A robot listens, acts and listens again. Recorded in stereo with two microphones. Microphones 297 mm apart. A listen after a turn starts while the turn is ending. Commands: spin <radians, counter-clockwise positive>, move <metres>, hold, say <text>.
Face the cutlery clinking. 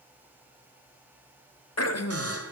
hold
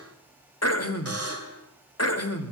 hold
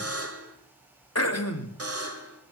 say I can't make out cutlery clinking to turn to.